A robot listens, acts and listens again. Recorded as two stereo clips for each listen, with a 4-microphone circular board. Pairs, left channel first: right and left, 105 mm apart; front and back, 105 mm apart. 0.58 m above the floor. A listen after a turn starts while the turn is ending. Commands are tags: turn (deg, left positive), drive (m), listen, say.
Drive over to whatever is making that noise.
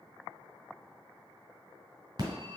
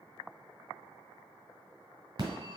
<turn deg="135"/>
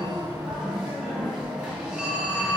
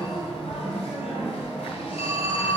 <drive m="1.0"/>
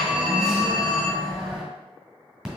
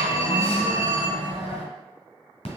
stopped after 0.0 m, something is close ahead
<say>Blocked. The phone ringing is further on, straight ahead.</say>